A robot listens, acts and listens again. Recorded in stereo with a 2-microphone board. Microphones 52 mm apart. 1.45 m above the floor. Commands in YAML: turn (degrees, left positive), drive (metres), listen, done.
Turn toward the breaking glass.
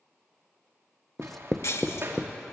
turn: 65
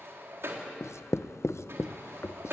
listen: true
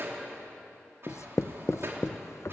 done: "I heard breaking glass, but can't make it out now. It was about straight ahead or 50° left."